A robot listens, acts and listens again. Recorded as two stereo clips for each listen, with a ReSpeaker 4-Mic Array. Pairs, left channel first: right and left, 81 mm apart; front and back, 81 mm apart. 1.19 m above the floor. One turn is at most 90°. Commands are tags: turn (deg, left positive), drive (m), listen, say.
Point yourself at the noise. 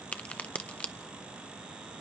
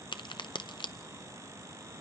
<turn deg="-15"/>
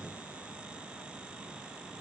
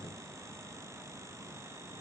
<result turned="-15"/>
<say>I heard a crack from this way, but can't make it out now.</say>